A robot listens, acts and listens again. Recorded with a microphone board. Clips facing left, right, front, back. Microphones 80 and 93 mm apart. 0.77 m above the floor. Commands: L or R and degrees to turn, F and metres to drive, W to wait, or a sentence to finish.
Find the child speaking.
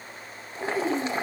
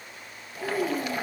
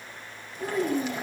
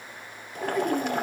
L45
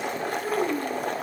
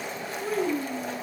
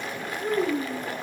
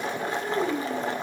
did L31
L15
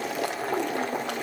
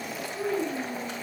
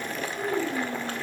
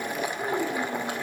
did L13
Facing the child speaking, over 4 m away.